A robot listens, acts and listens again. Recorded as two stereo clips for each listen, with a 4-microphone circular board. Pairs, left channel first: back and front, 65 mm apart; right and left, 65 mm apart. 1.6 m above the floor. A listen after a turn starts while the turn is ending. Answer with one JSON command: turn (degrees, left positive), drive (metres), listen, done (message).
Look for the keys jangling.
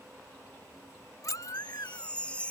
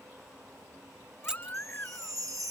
{"turn": 165}
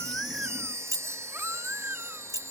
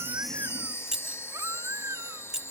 {"turn": 10}
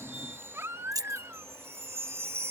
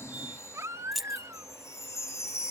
{"done": "Facing the keys jangling."}